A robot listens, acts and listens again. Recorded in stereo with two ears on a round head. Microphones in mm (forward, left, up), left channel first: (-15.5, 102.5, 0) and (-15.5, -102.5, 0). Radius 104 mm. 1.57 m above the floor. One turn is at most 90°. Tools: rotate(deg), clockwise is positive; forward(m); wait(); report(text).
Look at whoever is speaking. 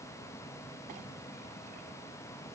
wait()
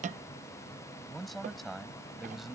rotate(-30)
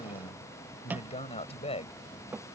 rotate(-90)
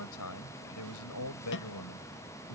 rotate(-80)
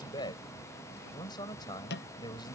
rotate(-20)
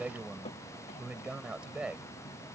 report("Found it: a man speaking, straight ahead.")